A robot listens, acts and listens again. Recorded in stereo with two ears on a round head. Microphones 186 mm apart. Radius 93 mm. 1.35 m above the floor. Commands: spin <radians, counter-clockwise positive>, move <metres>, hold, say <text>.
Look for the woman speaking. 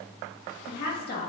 spin 0.79
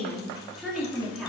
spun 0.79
say Found it: a woman speaking, straight ahead.